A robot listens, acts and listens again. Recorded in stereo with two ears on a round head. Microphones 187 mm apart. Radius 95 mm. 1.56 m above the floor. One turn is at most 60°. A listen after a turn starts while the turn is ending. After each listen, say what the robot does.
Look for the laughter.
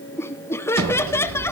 Turn 30° left.
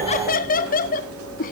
Turn 60° left.
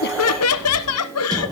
Turn 60° left.
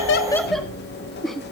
Found it: laughter, straight ahead, 1 to 2 m away.